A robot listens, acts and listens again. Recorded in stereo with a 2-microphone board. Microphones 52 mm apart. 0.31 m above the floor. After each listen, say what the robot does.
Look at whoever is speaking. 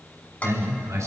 Turn 70° right.
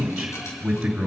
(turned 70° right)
Turn 10° right.
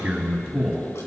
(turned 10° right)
Facing the man speaking.